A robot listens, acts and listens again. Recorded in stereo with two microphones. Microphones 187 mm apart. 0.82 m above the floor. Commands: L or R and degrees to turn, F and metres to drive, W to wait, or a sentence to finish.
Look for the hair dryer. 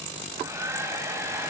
R30
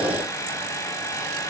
L15
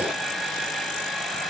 Facing the hair dryer, 2 to 4 m away.